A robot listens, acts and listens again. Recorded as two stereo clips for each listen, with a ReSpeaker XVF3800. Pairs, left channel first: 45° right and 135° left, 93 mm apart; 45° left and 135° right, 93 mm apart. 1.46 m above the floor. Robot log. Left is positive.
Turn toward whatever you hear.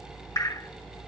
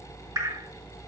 note: The dripping: 95° right.
cmd yaw -95
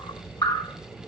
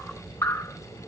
end: Found it: dripping, straight ahead.